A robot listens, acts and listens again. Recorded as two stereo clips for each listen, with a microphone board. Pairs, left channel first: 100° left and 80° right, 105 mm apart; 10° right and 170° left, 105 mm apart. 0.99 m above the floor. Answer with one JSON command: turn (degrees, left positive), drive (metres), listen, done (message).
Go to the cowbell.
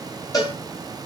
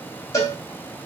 {"turn": 45}
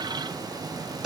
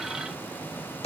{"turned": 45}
{"drive": 1.0}
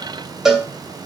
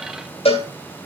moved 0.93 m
{"drive": 1.0}
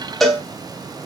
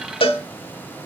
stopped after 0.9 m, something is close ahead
{"turn": 10}
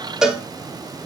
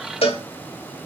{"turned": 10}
{"done": "Arrived at the cowbell, straight ahead."}